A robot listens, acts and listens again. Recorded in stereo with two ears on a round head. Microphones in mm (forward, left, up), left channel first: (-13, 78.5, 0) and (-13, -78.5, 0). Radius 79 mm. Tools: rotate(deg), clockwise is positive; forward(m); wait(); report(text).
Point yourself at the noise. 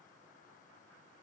wait()
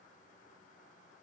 wait()
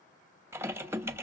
rotate(30)
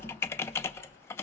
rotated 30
rotate(-15)
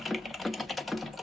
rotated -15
report("Facing the typing on a keyboard.")